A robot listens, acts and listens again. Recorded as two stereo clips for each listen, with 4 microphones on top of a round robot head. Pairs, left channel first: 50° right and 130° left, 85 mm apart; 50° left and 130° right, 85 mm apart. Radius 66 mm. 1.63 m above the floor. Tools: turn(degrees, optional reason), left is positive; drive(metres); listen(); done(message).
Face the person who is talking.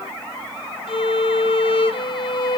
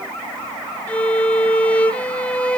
listen()
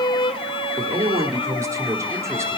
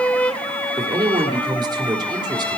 turn(degrees=-170, reason="The man speaking: 170° right.")
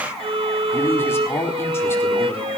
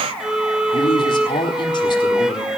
turn(degrees=15, reason="The man speaking is now 15° left.")
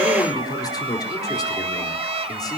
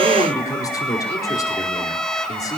done("Found it: a man speaking, straight ahead.")